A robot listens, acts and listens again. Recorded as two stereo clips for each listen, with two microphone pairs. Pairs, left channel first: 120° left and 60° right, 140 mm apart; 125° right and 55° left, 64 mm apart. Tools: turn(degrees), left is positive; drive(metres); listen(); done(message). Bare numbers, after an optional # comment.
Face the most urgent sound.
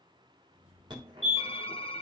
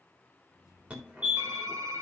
# The fire alarm: 10° right.
turn(-10)
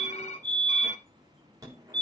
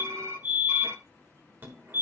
done("Facing the fire alarm.")